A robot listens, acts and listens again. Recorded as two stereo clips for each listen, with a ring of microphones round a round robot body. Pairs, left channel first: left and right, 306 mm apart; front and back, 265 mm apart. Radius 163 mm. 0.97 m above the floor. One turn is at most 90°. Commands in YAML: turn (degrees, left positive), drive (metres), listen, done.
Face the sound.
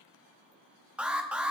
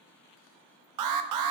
turn: -90
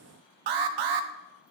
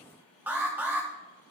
turn: -90
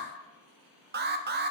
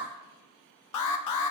turn: -30
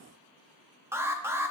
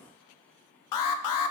done: "Facing the alarm, 1 to 2 m away."